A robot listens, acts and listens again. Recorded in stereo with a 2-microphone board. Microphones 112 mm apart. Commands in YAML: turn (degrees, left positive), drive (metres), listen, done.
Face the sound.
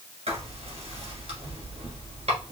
turn: -90
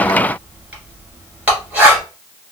turn: -10
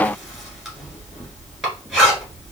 done: "Facing the writing."